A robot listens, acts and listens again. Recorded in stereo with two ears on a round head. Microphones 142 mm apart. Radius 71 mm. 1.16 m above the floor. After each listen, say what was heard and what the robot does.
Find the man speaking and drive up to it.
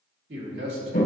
Turn 90° right.
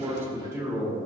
So it is at 15° right. Turn 15° right.
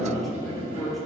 Drive 1.0 m forward.
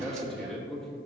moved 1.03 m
Drive 1.0 m forward.
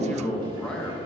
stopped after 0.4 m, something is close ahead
Arrived at the man speaking, straight ahead.